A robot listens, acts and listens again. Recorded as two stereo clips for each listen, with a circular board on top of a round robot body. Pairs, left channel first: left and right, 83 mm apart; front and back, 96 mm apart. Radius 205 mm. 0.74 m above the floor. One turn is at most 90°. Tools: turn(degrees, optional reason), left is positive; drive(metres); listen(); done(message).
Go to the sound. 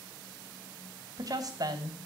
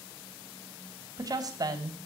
turn(degrees=-90, reason="The woman speaking: 130° right.")
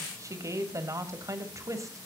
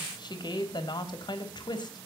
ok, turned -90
turn(degrees=-40, reason="The woman speaking is now 40° right.")
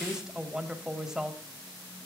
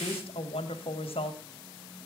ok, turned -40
turn(degrees=-10, reason="The woman speaking is now 10° right.")
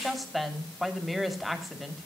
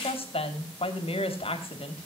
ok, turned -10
drive(metres=1.0)
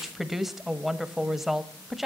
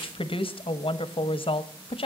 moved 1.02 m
drive(metres=1.0)
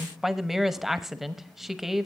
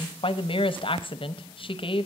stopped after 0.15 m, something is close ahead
done("Arrived at the woman speaking, straight ahead.")